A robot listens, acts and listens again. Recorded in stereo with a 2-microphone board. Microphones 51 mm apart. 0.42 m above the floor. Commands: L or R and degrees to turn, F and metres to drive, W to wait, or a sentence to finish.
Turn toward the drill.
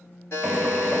R20
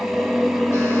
Found it: a drill, straight ahead, under 1 m away.